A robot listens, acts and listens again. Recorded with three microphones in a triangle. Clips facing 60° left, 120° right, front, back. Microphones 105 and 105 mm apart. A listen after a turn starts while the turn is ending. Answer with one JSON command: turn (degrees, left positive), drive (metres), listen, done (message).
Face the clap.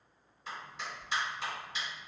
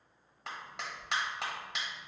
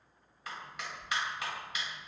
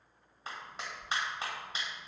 {"turn": -125}
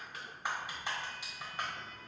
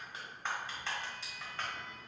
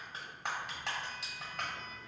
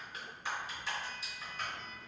{"turn": -15}
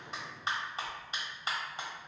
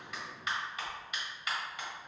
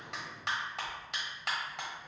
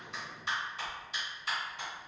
{"done": "Facing the clap."}